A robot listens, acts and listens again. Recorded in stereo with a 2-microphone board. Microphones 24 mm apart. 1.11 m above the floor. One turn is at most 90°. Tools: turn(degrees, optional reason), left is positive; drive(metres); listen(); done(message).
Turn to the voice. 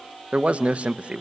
turn(degrees=-60, reason="The man speaking: about 60° right or 120° right.")
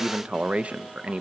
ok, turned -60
turn(degrees=-60, reason="So it is at 60° right.")
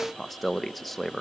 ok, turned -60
done("Found it: a man speaking, straight ahead, under 1 m away.")